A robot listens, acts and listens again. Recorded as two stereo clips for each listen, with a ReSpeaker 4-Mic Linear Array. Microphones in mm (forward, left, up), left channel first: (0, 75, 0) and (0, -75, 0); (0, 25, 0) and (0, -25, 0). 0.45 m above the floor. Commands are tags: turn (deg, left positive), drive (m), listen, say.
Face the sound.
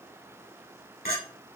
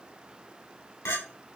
<turn deg="90"/>
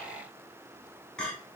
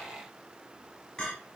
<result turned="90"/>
<say>Facing the clink.</say>